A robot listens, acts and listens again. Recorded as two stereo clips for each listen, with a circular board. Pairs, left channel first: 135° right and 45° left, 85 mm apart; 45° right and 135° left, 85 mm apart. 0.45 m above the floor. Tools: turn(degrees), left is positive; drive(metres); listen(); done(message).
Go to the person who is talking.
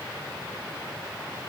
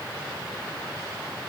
listen()
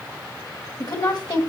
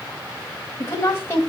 turn(degrees=-100)
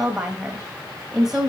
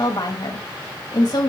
turn(degrees=-35)
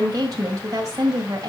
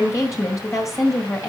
drive(metres=1.0)
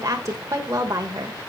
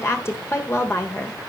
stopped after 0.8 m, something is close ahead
done("Arrived at the woman speaking, straight ahead.")